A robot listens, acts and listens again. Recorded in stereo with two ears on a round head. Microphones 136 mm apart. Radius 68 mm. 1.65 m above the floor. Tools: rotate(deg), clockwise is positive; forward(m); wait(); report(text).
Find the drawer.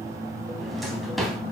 rotate(-30)
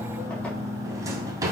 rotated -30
rotate(25)
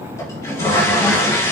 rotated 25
wait()
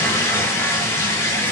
wait()
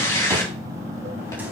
report("I heard a drawer from this way, but can't make it out now.")